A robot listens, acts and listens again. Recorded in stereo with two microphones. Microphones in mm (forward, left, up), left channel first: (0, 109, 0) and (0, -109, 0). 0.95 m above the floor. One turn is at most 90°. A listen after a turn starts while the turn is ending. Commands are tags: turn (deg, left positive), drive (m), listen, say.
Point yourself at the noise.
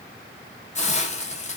<turn deg="30"/>
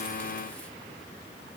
<listen/>
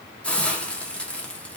<say>Found it: a hiss, straight ahead, under 1 m away.</say>